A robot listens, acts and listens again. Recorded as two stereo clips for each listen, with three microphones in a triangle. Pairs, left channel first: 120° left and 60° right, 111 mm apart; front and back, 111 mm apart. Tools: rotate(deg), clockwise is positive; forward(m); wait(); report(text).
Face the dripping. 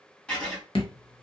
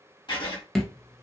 rotate(-85)
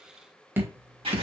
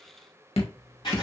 report("Found it: dripping, straight ahead, under 1 m away.")